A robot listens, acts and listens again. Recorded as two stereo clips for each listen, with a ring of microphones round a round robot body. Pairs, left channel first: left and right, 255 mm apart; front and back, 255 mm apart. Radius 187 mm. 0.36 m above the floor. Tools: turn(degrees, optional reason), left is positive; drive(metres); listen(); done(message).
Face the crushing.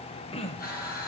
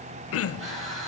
turn(degrees=145, reason="The crushing: 145° left.")
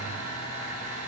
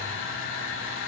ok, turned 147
done("Found it: crushing, straight ahead.")